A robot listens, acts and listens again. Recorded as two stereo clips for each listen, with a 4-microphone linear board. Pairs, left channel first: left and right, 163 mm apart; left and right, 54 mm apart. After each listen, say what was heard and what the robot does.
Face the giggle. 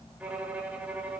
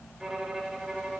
Keep listening.
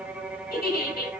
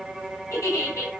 The giggle: about 70° left or 110° left. Turn 70° left.
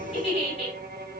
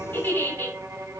So it is at 40° left. Turn 40° left.
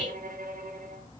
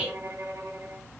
Found it: a giggle, straight ahead, over 4 m away.